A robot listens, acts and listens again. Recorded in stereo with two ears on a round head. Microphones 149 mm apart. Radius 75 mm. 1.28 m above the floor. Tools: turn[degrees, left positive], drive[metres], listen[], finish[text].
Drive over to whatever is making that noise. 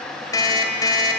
Thought: The alarm clock: about 25° left or 155° left.
Action: turn[25]
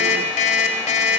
Thought: So it is at 130° left.
Action: turn[130]
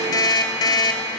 Thought: The alarm clock is now 25° left.
Action: turn[25]
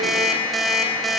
Action: drive[1.0]
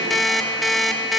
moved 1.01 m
Action: drive[1.0]
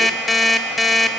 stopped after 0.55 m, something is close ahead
Action: finish[Arrived at the alarm clock, straight ahead.]